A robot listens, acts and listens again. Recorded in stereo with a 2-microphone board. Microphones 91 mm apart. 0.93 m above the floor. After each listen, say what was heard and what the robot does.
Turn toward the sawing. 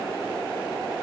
Keep listening.
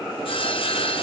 Turn 90° left.
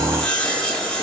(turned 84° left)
So it is at 10° left. Turn 10° left.
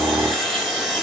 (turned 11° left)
Facing the sawing.